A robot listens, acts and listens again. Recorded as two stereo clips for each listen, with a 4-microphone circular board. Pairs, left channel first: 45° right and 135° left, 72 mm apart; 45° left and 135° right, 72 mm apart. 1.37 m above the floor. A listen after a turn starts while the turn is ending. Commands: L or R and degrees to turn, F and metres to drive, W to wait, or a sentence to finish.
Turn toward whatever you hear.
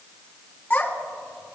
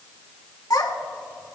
L15
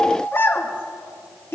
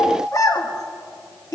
L10
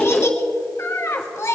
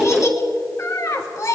Found it: a child speaking, straight ahead.